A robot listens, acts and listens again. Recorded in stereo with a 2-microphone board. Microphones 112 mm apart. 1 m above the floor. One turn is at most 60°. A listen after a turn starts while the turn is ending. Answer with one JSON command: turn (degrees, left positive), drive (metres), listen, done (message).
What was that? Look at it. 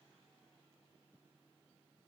{"listen": true}
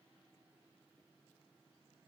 {"listen": true}
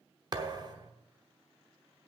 {"turn": -40}
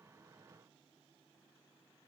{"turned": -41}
{"listen": true}
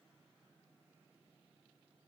{"done": "I heard a thud, but can't make it out now. It was about straight ahead or 100° right."}